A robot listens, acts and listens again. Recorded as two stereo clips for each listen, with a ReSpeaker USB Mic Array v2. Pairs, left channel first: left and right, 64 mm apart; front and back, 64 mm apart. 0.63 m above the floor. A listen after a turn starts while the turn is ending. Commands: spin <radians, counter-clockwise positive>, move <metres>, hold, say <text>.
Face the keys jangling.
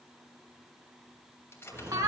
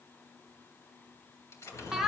spin 0.70
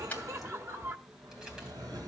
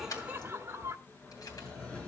hold
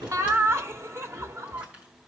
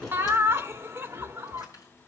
hold
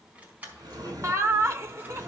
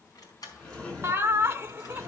spin -0.44
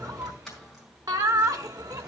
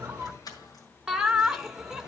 say Found it: keys jangling, straight ahead.